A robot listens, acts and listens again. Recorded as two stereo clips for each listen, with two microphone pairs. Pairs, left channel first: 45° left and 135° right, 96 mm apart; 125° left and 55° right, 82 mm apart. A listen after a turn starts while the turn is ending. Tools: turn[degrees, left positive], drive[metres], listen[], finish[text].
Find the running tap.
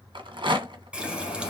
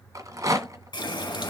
Thought: The running tap: 150° left.
Action: turn[150]
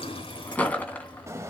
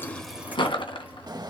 Action: listen[]
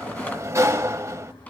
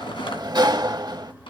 Action: listen[]
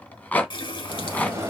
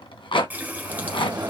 Thought: The running tap is now 15° left.
Action: turn[15]
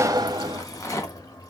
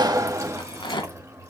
Action: finish[Found it: a running tap, straight ahead, 1 to 2 m away.]